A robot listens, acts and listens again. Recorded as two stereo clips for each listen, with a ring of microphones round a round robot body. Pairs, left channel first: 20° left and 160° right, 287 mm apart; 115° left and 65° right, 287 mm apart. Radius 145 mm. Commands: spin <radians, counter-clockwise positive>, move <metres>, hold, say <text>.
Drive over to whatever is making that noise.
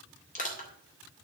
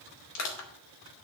spin 1.48
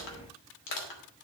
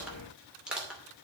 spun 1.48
spin 0.35
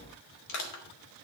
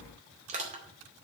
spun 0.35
move 1.0
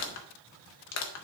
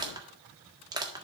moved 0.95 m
move 1.0
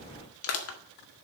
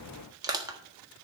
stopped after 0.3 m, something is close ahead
say Arrived at the crushing, straight ahead.